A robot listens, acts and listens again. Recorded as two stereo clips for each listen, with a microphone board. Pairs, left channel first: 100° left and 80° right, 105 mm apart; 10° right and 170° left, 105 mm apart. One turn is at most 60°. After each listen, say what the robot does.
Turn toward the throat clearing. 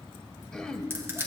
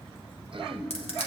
Turn 60° right.
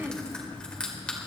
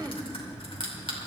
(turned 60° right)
Turn 60° right.
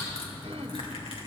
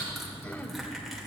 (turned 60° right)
Turn 60° right.
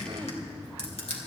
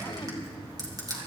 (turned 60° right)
Turn 20° right.
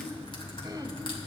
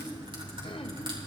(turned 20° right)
Turn 25° right.
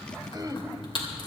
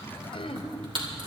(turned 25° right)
Turn 25° right.
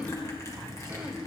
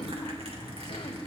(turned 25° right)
Facing the throat clearing, 1 to 2 m away.